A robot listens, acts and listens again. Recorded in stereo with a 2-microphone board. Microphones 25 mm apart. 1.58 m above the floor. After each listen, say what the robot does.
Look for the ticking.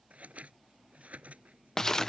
Keep listening.
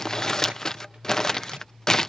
Keep listening.
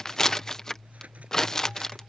I can't make out ticking, only scissors and crumpling.